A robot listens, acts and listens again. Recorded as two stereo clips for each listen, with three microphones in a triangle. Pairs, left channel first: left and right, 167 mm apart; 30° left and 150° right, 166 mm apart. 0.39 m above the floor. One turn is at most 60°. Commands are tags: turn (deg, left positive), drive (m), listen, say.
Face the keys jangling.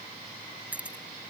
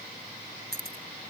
<turn deg="-60"/>
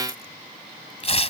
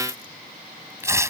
<turn deg="-60"/>
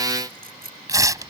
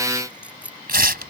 <turn deg="-60"/>
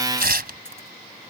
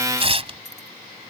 <turn deg="-10"/>
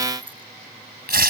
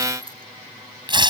<listen/>
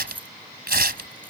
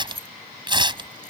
<turn deg="-10"/>
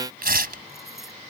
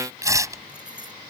<listen/>
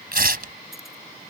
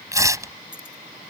<listen/>
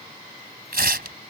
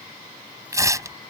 <say>Facing where the keys jangling came from. I can't hear it now.</say>